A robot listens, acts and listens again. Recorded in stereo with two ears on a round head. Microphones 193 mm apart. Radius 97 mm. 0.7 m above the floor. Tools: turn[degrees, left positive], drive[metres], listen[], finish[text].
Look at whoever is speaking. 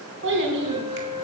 Thought: The child speaking: about 60° right or 120° right.
Action: turn[-60]
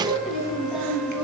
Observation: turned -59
Action: finish[Found it: a child speaking, straight ahead.]